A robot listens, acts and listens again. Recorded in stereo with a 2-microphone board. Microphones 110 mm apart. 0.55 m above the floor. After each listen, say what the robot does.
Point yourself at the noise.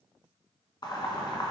Turn 45° left.
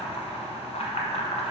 Turn 90° left.
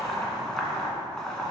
Found it: boiling, straight ahead, 1 to 2 m away.